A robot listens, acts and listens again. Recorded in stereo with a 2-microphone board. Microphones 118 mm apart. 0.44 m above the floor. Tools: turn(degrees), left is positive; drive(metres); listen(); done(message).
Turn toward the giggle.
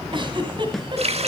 turn(degrees=-45)
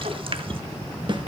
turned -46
turn(degrees=-90)
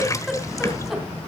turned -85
done("Found it: a giggle, straight ahead, 2 to 4 m away.")